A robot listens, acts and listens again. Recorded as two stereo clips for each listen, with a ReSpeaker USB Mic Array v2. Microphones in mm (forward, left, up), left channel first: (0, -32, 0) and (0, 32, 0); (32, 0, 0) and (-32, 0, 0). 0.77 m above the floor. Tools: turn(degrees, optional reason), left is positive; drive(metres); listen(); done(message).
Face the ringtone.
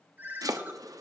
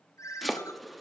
turn(degrees=35, reason="The ringtone: 35° left.")
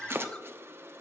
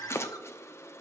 turn(degrees=-15, reason="The ringtone is now 15° right.")
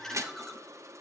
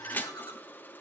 listen()
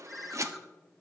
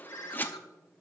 done("Found it: a ringtone, straight ahead, 1 to 2 m away.")